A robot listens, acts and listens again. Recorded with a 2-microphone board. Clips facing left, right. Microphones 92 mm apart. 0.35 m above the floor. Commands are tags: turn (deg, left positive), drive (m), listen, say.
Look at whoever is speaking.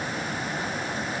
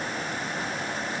<listen/>
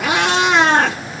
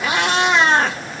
<listen/>
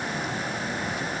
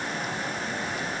<say>I can't make out anyone speaking to turn to.</say>